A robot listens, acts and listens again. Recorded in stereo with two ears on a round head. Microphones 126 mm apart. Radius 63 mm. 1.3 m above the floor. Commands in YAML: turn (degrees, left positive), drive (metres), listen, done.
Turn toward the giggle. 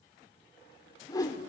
listen: true
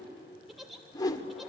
turn: 30
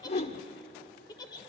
turn: 150
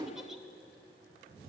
listen: true
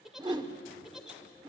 done: "Facing the giggle."